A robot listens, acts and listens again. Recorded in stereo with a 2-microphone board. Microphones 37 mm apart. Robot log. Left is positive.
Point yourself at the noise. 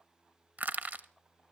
note: The crushing: about 50° right or 130° right.
cmd yaw -50
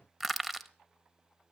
end: Found it: crushing, straight ahead.